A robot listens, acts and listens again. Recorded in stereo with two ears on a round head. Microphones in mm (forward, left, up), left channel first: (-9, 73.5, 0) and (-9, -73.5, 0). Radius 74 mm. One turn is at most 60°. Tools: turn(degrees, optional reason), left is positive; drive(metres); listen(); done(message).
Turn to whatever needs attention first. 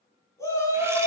turn(degrees=15, reason="The shout: about 15° left or 165° left.")
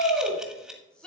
done("Found it: a shout, straight ahead.")